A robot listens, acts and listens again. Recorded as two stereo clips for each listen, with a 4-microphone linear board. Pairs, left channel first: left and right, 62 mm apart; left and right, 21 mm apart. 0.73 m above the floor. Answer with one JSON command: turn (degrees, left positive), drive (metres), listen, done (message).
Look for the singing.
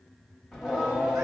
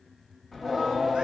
{"turn": -15}
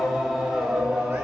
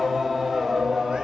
{"turn": -20}
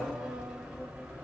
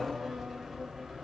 {"turn": -20}
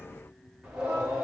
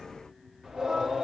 {"turn": -15}
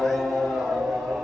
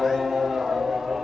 {"turn": -30}
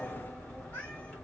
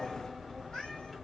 {"turn": 20}
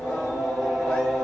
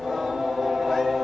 {"done": "Found it: singing, straight ahead."}